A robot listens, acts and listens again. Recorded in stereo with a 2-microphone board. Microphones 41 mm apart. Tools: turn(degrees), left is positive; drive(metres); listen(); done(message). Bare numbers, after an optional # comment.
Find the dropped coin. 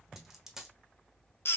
turn(-30)
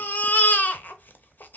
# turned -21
listen()
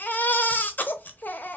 done("I heard a dropped coin, but can't make it out now. It was about 10° left or 150° right.")